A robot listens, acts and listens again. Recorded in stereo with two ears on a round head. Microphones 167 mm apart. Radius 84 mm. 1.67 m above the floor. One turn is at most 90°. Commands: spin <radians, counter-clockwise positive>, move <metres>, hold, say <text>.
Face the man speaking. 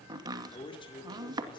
spin 0.44
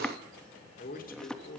spin 1.57
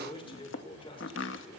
spin 0.44
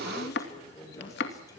spin 0.26
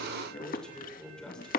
say Facing the man speaking.